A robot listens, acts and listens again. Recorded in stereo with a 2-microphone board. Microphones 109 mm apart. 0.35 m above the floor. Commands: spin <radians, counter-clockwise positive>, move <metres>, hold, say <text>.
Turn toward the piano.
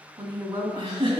hold
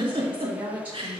hold
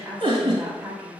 say I can't make out a piano to turn to.